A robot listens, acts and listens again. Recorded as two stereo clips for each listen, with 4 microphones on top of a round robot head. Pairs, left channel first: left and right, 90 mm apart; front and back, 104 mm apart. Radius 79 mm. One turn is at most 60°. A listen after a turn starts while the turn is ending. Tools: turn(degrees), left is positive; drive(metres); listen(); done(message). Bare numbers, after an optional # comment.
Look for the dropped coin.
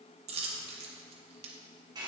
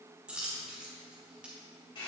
# The dropped coin: 95° right.
turn(-60)
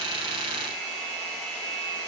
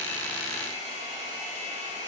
# Nothing new. It was at 35° right.
turn(-35)
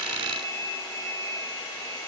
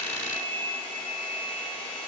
done("Facing where the dropped coin came from. I can't hear it now.")